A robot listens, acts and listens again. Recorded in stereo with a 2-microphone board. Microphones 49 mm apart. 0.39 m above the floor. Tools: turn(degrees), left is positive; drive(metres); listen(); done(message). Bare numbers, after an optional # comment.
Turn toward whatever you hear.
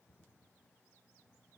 listen()
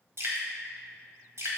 # The dripping: about 60° right or 120° right.
turn(-60)
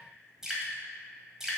# So it is at 10° right.
turn(-10)
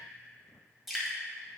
done("Found it: dripping, straight ahead, 1 to 2 m away.")